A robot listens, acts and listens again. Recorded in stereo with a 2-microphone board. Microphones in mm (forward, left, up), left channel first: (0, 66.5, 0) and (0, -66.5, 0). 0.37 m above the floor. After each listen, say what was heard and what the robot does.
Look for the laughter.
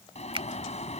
Keep listening.
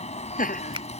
Turn 90° left.
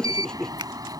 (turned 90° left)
Found it: laughter, straight ahead.